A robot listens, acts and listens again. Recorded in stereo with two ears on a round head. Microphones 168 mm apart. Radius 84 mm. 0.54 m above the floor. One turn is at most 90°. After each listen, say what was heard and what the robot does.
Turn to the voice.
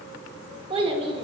The child speaking: about 30° right or 150° right. Turn 30° right.
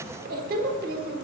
So it is at 115° right. Turn 90° right.
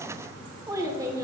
The child speaking is now 20° right. Turn 20° right.
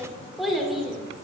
Found it: a child speaking, straight ahead.